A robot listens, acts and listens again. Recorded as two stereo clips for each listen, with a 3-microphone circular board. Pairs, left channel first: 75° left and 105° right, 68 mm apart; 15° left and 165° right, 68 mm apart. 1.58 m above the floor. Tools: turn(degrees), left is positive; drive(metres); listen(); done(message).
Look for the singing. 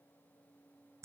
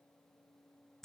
listen()
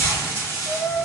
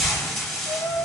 turn(degrees=-10)
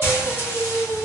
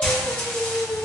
done("Facing the singing, 2 to 4 m away.")